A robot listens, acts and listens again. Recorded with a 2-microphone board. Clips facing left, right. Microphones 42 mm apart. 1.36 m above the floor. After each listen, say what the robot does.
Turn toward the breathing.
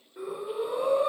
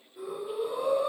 Turn 65° left.
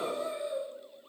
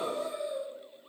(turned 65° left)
Turn 45° left.
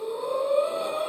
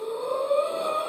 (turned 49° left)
Found it: breathing, straight ahead.